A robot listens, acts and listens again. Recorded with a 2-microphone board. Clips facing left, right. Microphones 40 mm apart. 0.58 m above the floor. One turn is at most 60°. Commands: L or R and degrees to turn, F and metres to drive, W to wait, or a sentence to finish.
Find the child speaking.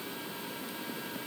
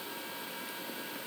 W
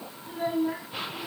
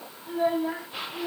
R35
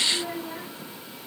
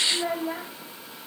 R60
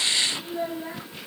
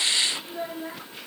Facing the child speaking.